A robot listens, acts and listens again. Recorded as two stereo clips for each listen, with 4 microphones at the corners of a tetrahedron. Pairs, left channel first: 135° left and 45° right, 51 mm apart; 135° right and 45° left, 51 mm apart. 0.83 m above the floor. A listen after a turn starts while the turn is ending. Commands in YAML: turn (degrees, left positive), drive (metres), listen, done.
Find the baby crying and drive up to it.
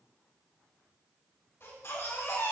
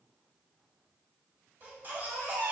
turn: 100
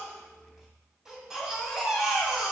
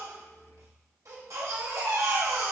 turn: 35
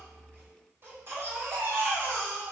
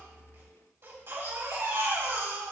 drive: 1.0
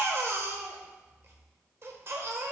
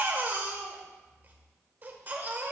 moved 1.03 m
turn: -10
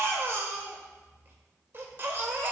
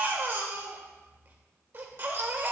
drive: 1.0
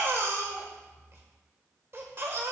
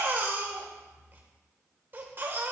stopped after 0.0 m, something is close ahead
done: "I am next to the baby crying."